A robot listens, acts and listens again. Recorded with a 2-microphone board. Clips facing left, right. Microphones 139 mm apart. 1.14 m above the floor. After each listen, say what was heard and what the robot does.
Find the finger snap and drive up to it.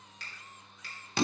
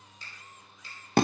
Turn 90° left.
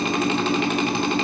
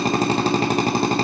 Keep listening.
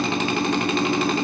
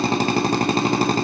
Keep listening.
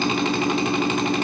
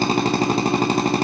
Facing where the finger snap came from. I can't hear it now. I did not reach it.